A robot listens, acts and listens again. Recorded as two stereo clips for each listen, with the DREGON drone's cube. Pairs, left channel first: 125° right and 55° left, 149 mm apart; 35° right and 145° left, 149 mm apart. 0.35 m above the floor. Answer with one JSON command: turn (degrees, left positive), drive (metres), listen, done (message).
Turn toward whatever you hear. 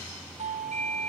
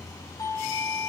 {"turn": 25}
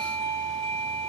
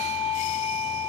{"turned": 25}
{"done": "Found it: a doorbell, straight ahead."}